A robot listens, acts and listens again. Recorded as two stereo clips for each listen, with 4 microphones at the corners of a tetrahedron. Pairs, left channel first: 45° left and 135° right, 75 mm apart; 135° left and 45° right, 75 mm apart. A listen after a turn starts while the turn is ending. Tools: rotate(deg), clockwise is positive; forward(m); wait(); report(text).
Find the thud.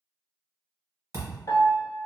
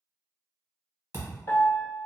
rotate(90)
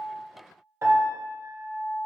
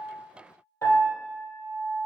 report("Facing where the thud came from. I can't hear it now.")